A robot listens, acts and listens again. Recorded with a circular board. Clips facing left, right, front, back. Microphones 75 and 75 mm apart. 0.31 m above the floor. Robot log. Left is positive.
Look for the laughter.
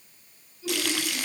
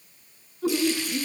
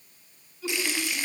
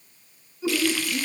note: The laughter: 115° right.
cmd yaw -115
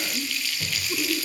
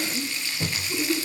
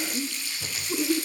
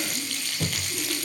end: Found it: laughter, straight ahead, over 4 m away.